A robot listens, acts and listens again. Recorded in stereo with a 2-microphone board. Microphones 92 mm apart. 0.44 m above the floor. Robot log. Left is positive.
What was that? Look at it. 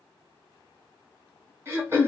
note: The throat clearing: about 25° right or 155° right.
cmd yaw -25
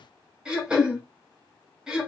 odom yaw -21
note: So it is at 10° right.
cmd yaw -10
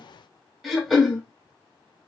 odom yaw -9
end: Facing the throat clearing.